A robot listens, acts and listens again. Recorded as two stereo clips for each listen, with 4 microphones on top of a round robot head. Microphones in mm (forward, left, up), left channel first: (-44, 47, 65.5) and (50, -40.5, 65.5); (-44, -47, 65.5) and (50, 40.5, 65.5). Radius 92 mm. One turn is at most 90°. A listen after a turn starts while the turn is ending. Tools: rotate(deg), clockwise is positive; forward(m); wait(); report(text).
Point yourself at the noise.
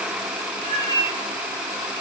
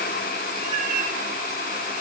rotate(-15)
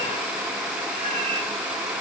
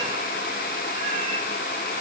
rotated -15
wait()
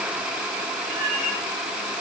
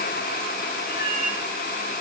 report("Found it: a cat meowing, straight ahead.")